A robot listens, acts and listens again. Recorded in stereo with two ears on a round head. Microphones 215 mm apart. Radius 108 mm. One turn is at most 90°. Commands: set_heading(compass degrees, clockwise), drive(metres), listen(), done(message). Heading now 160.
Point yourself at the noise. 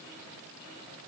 listen()
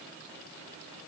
listen()
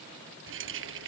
set_heading(215)
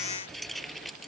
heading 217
done("Facing the keys jangling.")